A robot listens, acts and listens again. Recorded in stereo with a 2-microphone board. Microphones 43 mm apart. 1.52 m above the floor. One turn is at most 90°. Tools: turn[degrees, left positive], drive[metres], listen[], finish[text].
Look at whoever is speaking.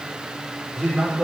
Action: turn[-30]
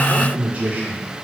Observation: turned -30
Thought: So it is at 140° right.
Action: turn[-90]
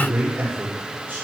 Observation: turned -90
Thought: The man speaking is now 50° right.
Action: turn[-50]
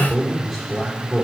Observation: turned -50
Action: finish[Facing the man speaking, over 4 m away.]